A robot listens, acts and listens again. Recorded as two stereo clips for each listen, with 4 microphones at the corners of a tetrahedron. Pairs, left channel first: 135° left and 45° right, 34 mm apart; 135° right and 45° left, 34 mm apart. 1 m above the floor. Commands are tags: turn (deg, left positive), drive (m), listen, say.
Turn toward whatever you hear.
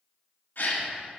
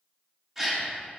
<turn deg="125"/>
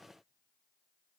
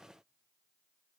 <say>I heard a gasp from this way, but can't make it out now.</say>